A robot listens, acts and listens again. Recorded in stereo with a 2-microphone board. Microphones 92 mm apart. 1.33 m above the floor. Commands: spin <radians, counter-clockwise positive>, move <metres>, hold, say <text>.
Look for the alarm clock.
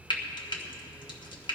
hold
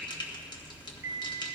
spin -0.52
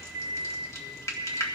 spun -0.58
spin -2.44
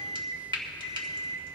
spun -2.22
spin -0.17
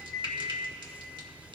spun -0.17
say Facing the alarm clock, 2 to 4 m away.